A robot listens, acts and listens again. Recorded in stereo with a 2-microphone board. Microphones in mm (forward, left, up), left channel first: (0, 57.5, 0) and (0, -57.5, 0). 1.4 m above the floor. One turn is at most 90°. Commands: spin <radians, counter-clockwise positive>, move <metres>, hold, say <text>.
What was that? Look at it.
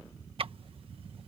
spin -0.96
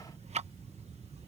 spin -1.22
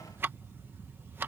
spin -0.35
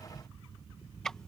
say Found it: ticking, straight ahead.